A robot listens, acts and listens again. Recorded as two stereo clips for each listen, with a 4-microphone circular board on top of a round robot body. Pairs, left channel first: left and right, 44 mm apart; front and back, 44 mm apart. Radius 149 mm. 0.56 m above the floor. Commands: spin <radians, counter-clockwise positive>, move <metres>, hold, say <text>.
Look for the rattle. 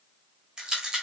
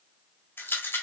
spin -0.35
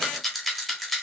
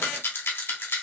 say Facing the rattle.